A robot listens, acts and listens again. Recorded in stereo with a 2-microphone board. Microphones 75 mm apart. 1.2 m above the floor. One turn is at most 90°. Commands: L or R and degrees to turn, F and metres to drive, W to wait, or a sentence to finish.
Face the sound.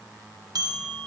R65
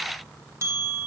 R45
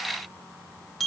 Facing the bell, 1 to 2 m away.